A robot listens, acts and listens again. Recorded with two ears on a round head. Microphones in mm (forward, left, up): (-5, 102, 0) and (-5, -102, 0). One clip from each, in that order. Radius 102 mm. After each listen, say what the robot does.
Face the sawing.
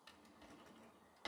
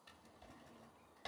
Keep listening.
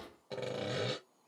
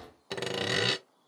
Turn 60° right.
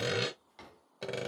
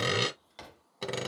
Turn 10° right.
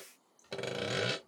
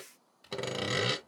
Facing the sawing.